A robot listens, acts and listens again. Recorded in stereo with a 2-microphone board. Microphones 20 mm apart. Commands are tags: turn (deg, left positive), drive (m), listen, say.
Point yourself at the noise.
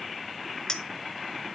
<turn deg="30"/>
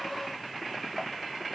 <listen/>
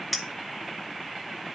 <say>Facing the clink.</say>